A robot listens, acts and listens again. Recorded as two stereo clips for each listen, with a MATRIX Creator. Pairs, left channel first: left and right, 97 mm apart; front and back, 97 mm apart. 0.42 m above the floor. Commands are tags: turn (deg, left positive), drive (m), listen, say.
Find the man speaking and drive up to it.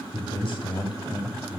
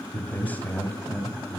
<turn deg="70"/>
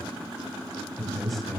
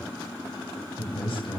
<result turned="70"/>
<drive m="1.0"/>
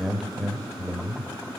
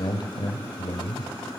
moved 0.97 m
<drive m="1.0"/>
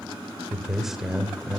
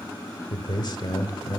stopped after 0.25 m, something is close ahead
<say>I am next to the man speaking.</say>